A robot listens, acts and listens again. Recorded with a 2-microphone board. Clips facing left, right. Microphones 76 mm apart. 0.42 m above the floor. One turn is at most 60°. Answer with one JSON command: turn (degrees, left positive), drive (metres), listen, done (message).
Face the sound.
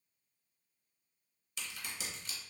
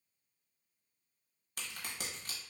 {"turn": -50}
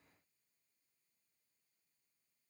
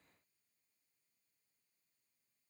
{"listen": true}
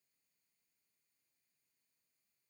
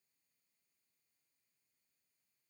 {"done": "I heard a crack, but can't make it out now. It was about straight ahead or 80° right."}